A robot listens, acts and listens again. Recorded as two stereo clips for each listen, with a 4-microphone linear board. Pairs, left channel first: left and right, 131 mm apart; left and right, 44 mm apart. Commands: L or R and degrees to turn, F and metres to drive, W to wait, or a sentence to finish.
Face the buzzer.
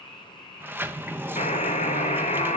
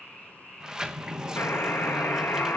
L70
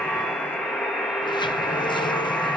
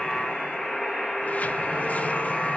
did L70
Found it: a buzzer, straight ahead.